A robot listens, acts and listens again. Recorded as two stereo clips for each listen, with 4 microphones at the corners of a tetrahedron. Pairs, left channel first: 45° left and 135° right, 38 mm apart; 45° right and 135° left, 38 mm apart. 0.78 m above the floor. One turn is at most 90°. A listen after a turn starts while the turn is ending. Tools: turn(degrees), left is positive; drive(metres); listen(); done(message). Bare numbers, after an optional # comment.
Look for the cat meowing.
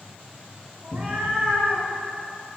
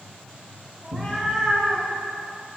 # The cat meowing: 150° right.
turn(-90)
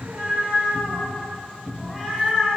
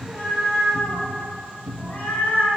# The cat meowing is now 65° right.
turn(-65)
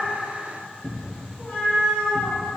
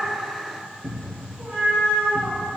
done("Found it: a cat meowing, straight ahead, 2 to 4 m away.")